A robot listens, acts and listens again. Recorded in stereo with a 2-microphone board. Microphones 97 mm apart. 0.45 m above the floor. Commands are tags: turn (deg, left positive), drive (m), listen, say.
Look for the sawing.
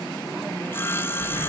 <turn deg="25"/>
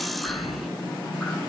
<listen/>
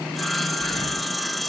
<say>Facing the sawing, 1 to 2 m away.</say>